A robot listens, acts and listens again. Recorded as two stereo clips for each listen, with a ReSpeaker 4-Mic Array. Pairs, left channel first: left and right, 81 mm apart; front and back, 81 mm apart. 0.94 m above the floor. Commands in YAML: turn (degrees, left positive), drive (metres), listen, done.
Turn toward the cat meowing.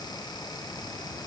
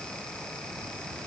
listen: true
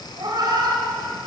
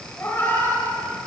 turn: -55
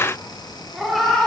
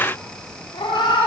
done: "Facing the cat meowing, 1 to 2 m away."